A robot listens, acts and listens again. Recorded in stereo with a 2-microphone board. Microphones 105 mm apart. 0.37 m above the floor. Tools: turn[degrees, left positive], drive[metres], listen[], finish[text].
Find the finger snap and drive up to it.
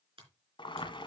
Thought: The finger snap: about 55° right or 125° right.
Action: turn[-55]
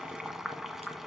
Action: listen[]
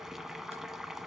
Action: listen[]
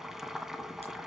Action: finish[I heard a finger snap, but can't make it out now. It was about straight ahead or 70° right. I did not reach it.]